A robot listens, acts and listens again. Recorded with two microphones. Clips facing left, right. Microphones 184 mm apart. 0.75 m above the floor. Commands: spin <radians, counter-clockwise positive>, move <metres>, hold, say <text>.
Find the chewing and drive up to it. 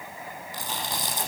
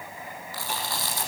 spin 0.35
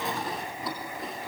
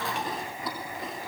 move 1.0
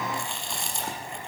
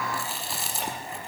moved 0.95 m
move 1.0
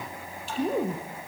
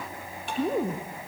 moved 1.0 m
move 1.0
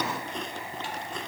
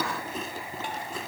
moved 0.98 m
move 1.0
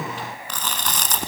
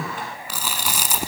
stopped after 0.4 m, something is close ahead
spin -0.17
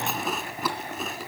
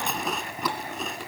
say I am next to the chewing.